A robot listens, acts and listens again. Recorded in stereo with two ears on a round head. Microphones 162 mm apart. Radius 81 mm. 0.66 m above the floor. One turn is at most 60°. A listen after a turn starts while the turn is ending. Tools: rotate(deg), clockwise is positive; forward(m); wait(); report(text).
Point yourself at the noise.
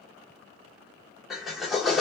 rotate(-30)
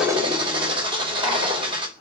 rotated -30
rotate(35)
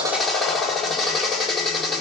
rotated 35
report("Found it: a drill, straight ahead.")